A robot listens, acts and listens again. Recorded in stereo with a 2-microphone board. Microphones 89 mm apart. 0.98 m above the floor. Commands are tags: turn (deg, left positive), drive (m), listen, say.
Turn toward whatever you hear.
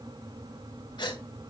<turn deg="55"/>
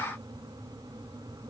<listen/>
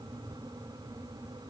<say>I heard a gasp, but can't make it out now. It was about straight ahead or 70° left.</say>